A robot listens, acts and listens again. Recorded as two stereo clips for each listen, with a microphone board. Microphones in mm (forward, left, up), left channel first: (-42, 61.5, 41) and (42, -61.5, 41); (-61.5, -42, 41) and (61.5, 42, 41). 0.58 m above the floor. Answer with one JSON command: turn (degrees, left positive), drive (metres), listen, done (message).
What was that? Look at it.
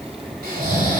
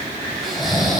{"turn": -55}
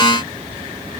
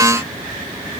{"listen": true}
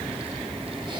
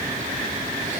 {"listen": true}
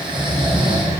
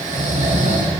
{"done": "Found it: snoring, straight ahead, 2 to 4 m away."}